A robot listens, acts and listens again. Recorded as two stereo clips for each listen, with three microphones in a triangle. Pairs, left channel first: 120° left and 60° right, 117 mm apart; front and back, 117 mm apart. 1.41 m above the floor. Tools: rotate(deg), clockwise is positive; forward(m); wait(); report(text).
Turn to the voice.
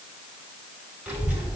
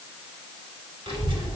rotate(140)
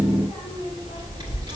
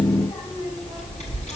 rotate(15)
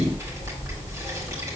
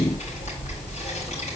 report("Facing the child speaking, 2 to 4 m away.")